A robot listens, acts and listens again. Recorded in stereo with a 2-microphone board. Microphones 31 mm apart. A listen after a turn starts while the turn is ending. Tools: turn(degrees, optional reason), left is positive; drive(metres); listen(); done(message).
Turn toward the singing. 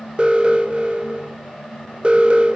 listen()
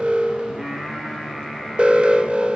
turn(degrees=-20, reason="The singing: about 20° right or 160° right.")
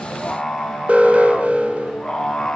turn(degrees=15, reason="So it is at 15° left.")
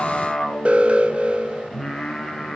done("Facing the singing, over 4 m away.")